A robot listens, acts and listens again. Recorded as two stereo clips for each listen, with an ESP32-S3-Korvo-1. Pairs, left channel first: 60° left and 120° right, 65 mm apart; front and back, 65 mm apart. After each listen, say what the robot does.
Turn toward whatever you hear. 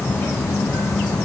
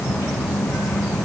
Keep listening.
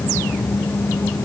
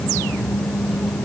Keep listening.
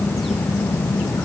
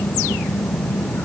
I can't make out anything to turn to.